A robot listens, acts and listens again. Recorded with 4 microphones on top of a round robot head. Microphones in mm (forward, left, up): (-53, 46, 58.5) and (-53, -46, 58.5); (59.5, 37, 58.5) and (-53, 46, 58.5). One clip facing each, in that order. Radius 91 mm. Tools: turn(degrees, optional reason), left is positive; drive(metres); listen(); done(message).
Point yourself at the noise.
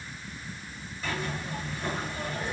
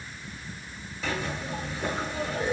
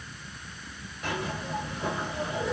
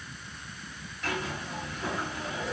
turn(degrees=-85, reason="The zipper: 85° right.")
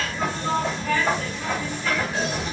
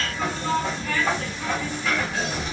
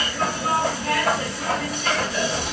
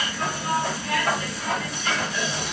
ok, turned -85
done("Facing the zipper.")